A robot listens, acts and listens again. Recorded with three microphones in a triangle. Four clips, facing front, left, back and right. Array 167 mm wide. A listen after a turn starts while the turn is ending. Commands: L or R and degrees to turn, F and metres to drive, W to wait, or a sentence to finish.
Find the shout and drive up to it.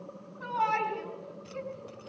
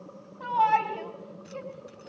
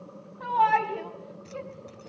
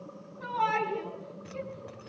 L140
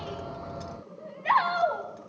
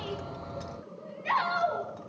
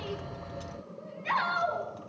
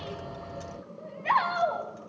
R30
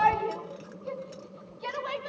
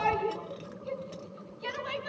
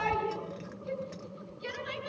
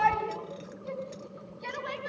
F1.0
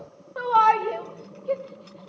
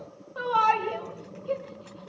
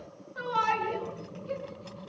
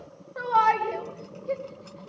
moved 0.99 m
R10
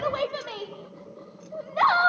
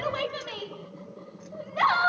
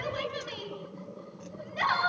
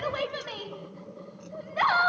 F1.0
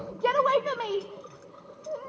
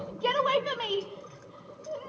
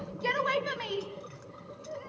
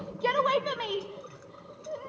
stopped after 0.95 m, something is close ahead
I am next to the shout.